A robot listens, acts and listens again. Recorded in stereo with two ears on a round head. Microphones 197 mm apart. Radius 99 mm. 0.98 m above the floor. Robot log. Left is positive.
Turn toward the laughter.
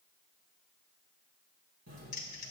cmd idle
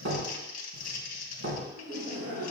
note: The laughter: about 50° right or 130° right.
cmd yaw -50
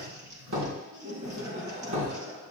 note: So it is at 65° right.
cmd yaw -65
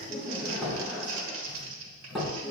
end: Found it: laughter, straight ahead.